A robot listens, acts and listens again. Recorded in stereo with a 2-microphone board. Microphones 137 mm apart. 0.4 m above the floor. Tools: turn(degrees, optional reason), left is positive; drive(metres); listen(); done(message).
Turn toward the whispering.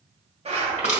listen()
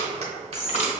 turn(degrees=45, reason="The whispering: about 45° left or 135° left.")
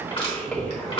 done("Facing the whispering.")